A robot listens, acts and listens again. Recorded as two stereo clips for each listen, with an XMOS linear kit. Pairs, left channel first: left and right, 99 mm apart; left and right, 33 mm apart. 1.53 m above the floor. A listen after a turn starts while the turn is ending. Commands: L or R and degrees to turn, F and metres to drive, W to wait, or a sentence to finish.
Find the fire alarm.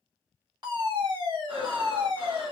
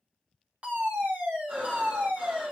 R45
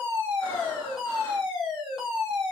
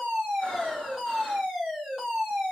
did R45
Found it: a fire alarm, straight ahead.